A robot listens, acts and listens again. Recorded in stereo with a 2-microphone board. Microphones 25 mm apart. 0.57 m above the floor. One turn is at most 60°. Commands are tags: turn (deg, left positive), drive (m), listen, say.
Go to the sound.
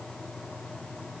<listen/>
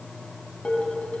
<turn deg="55"/>
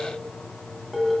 <drive m="1.0"/>
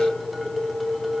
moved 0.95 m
<drive m="1.0"/>
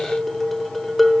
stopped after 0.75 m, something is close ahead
<turn deg="10"/>
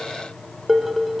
<say>I am next to the dishes clattering.</say>